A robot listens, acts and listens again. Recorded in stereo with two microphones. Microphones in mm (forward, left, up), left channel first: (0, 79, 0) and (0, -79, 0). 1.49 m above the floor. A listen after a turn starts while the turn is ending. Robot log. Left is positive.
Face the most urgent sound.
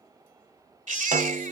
note: The baby crying: about 55° right or 125° right.
cmd yaw -55
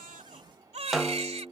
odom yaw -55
note: So it is at 50° right.
cmd yaw -50
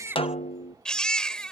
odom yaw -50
end: Found it: a baby crying, straight ahead.